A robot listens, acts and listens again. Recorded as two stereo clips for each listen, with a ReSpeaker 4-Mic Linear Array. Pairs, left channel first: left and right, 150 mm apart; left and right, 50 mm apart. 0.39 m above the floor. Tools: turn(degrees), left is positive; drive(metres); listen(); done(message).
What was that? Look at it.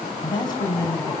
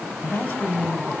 turn(degrees=25)
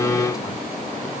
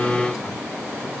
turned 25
listen()
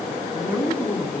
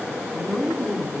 turn(degrees=-15)
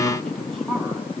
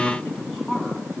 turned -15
done("Facing the woman speaking, 2 to 4 m away.")